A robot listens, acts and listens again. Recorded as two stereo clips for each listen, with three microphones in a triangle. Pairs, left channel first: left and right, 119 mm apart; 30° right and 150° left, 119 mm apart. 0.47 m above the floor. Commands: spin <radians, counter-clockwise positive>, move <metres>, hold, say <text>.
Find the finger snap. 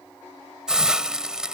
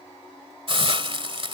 hold
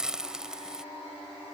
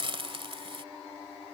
hold
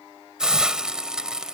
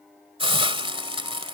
say I can't make out a finger snap to turn to.